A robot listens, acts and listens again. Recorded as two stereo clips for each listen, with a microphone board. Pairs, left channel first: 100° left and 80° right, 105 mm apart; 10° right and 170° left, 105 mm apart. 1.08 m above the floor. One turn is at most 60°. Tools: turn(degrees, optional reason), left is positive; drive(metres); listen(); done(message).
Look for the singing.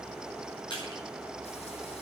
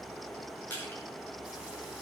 listen()
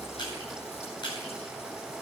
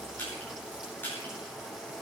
listen()
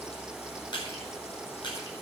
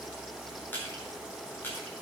done("I can't make out singing, only crushing.")